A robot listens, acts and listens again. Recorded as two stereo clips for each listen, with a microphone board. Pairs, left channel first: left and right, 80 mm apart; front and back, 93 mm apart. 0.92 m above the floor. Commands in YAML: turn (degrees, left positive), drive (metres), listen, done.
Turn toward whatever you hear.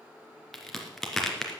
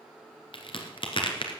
done: "Found it: a crack, straight ahead."